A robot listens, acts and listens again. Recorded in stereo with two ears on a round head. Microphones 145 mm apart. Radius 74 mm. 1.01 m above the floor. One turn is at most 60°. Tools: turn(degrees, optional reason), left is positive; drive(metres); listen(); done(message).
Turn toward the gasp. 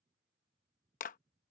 listen()
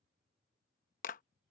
listen()
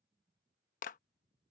done("I can't make out a gasp to turn to.")